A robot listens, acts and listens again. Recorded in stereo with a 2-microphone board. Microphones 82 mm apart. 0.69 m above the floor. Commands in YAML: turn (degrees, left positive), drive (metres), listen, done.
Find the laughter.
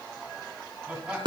turn: -30
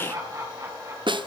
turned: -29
turn: -140
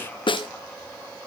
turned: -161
turn: 20
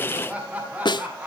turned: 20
turn: -15
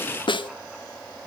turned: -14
listen: true
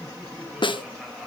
done: "Facing the laughter, over 4 m away."